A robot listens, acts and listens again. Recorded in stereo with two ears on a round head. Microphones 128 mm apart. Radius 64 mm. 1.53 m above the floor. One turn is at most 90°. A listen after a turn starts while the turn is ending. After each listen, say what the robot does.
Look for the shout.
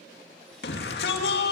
Turn 90° left.
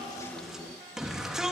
Found it: a shout, straight ahead, 2 to 4 m away.